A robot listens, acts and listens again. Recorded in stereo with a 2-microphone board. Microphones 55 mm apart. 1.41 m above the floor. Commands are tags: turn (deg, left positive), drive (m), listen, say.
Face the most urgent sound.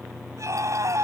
<turn deg="-70"/>
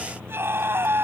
<turn deg="-45"/>
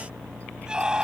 <turn deg="-15"/>
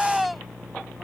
<say>Found it: a scream, straight ahead.</say>